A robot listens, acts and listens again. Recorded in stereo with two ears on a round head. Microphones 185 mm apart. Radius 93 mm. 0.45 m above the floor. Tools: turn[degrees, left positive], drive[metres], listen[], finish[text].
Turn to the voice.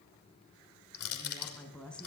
Action: turn[30]
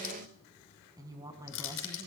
Thought: So it is at 15° right.
Action: turn[-15]
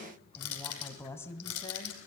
Thought: The woman speaking is now 15° left.
Action: turn[15]
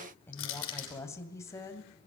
Thought: The woman speaking is now 15° left.
Action: turn[15]
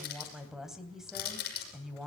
Action: finish[Found it: a woman speaking, straight ahead.]